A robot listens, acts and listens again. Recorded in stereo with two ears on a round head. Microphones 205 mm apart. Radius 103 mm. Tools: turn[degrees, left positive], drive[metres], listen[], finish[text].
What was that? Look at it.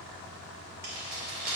Thought: The keys jangling: about 40° right or 140° right.
Action: turn[-40]
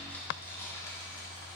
Thought: So it is at 20° left.
Action: turn[20]
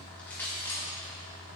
Thought: The keys jangling is now 10° left.
Action: turn[10]
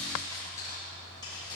Thought: The keys jangling is now 20° left.
Action: turn[20]
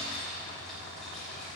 Action: finish[Facing the keys jangling, 2 to 4 m away.]